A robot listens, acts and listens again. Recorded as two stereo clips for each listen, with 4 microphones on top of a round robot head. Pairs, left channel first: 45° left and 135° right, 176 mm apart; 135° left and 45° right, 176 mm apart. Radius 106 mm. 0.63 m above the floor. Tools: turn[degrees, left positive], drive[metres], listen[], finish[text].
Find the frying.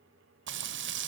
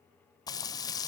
Thought: The frying: 150° right.
Action: turn[-150]
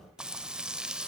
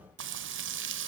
Thought: The frying is now 50° right.
Action: turn[-50]
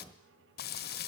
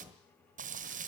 Action: finish[Found it: frying, straight ahead.]